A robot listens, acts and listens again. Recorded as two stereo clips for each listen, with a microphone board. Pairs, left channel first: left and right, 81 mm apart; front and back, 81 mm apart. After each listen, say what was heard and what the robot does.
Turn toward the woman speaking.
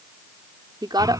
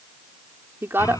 The woman speaking: 120° right. Turn 120° right.
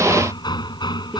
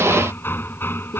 Keep listening.
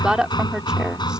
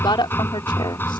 The woman speaking is now 10° right. Turn 10° right.
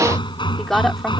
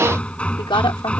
Found it: a woman speaking, straight ahead.